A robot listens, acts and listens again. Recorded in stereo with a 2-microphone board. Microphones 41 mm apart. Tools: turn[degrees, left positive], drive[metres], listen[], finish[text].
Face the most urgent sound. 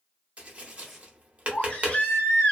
Thought: The baby crying: about 30° left or 150° left.
Action: turn[30]
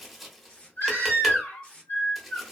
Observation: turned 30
Thought: So it is at 115° left.
Action: turn[115]
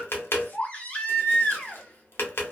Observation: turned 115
Thought: The baby crying is now 40° left.
Action: turn[40]
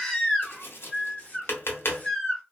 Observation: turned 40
Thought: The baby crying is now 10° left.
Action: turn[10]
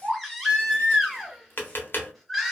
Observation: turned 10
Action: finish[Found it: a baby crying, straight ahead.]